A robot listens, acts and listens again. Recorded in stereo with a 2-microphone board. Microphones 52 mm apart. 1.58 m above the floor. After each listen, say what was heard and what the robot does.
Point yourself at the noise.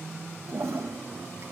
The toilet flushing: about 65° right or 115° right. Turn 65° right.
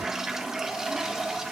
So it is at 10° right. Turn 10° right.
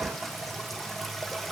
Found it: a toilet flushing, straight ahead, 1 to 2 m away.